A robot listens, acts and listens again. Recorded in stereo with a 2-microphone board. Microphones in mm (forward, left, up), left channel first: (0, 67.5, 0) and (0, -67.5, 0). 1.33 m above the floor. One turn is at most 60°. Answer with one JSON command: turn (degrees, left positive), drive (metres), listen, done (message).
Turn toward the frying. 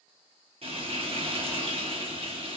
{"turn": -45}
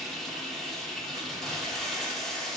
{"done": "Facing the frying."}